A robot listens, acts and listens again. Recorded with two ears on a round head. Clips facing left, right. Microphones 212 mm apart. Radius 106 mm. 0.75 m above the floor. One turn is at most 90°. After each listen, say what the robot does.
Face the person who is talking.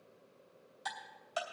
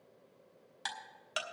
Keep listening.
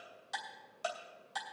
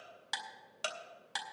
Keep listening.
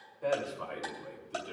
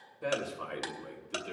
Turn 40° right.
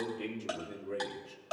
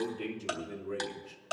Turn 10° right.
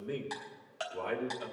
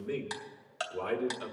Turn 15° right.
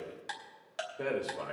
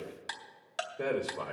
Facing the man speaking, 2 to 4 m away.